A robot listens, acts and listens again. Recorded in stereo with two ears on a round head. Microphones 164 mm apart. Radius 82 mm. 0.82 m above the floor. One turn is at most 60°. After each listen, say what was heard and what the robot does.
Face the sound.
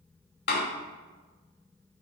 The door slam: about 60° left or 120° left. Turn 60° left.
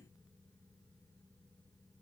Keep listening.
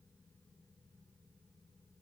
I heard a door slam, but can't make it out now. It was about straight ahead or 60° left.